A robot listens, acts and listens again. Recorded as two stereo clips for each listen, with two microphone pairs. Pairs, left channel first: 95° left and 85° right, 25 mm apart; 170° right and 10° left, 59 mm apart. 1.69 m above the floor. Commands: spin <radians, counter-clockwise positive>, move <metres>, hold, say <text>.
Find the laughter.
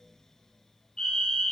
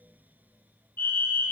hold
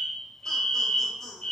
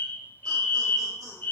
spin 0.17
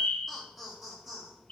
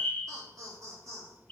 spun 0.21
spin -0.26
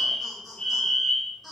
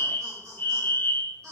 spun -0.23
spin -0.17
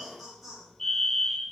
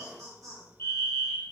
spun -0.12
say Found it: laughter, straight ahead.